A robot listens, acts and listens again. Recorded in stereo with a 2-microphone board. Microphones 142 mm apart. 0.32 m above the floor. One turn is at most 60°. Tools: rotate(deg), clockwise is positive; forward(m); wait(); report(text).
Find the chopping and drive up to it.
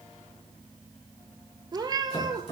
rotate(-50)
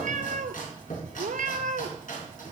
rotate(-60)
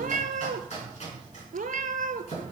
rotate(-55)
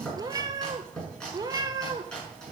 forward(1.0)
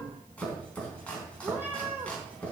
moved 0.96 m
rotate(-10)
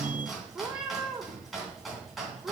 forward(1.0)
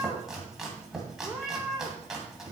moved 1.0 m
forward(1.0)
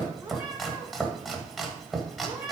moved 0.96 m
forward(1.0)
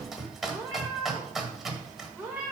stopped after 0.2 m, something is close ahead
report("I am next to the chopping.")